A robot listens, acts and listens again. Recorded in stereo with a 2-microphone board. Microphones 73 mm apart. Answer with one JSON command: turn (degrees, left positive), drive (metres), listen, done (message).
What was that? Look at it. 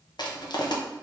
{"turn": 75}
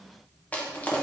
{"turn": 20}
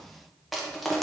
{"done": "Facing the crushing, under 1 m away."}